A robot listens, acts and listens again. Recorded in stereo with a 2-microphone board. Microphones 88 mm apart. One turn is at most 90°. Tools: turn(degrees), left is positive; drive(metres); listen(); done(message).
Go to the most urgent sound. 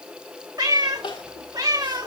turn(degrees=70)
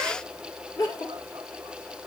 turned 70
turn(degrees=40)
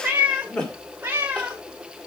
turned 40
turn(degrees=10)
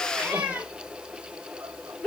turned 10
drive(metres=1.0)
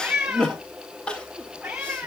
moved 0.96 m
turn(degrees=10)
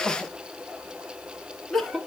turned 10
drive(metres=1.0)
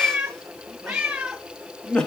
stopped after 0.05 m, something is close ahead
turn(degrees=10)
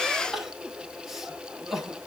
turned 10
done("I am next to the crying.")